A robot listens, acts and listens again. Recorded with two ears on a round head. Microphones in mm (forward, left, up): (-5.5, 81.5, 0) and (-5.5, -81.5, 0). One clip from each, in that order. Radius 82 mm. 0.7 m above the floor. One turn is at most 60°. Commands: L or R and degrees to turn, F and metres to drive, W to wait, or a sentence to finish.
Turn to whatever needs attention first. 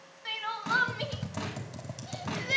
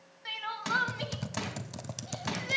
L30
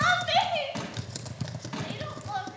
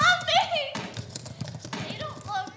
R30
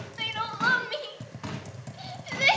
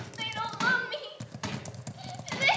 L10
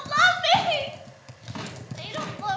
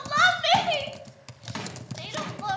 Found it: crying, straight ahead, 1 to 2 m away.